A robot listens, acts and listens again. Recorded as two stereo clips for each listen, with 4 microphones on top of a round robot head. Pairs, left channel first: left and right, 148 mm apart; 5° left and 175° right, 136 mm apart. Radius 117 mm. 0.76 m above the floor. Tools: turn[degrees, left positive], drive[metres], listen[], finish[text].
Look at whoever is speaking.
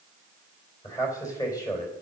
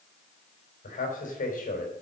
Thought: The man speaking: 25° left.
Action: turn[25]
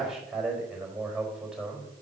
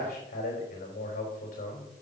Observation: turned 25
Action: finish[Found it: a man speaking, straight ahead.]